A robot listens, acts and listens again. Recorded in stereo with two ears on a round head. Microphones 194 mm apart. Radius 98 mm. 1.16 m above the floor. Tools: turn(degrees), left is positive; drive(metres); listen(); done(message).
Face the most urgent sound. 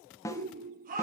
turn(degrees=-40)
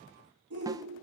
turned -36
turn(degrees=-100)
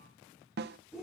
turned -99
done("Facing the shout, over 4 m away.")